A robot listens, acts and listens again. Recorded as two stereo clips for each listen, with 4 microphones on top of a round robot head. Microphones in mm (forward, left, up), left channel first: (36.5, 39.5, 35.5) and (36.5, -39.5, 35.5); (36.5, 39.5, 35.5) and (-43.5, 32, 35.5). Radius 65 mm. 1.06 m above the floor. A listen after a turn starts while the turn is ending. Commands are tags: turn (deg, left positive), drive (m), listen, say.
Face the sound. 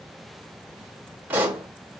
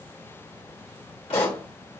<turn deg="-25"/>
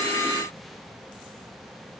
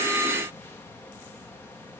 <say>I heard a pop from this way, but can't make it out now.</say>